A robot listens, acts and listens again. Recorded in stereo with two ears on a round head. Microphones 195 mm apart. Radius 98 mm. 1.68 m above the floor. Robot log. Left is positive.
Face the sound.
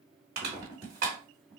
note: The crushing: about 45° right or 135° right.
cmd yaw -45
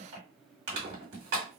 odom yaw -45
note: So it is at 75° right.
cmd yaw -75
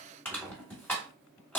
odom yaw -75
note: The crushing is now 10° left.
cmd yaw +10
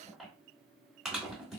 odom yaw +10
end: Facing the crushing.